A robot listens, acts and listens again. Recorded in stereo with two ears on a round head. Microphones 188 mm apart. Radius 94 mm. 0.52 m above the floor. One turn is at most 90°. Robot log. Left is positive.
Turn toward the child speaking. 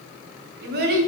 note: The child speaking: about 50° right or 130° right.
cmd yaw -50
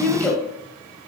note: So it is at 10° left.
cmd yaw +10
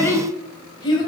note: The child speaking is now 25° left.
cmd yaw +25
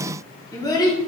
note: The child speaking is now 20° left.
cmd yaw +20
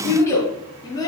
note: The child speaking is now 20° left.
cmd yaw +20
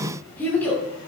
note: The child speaking is now 10° left.
cmd yaw +10
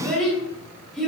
end: Facing the child speaking, 2 to 4 m away.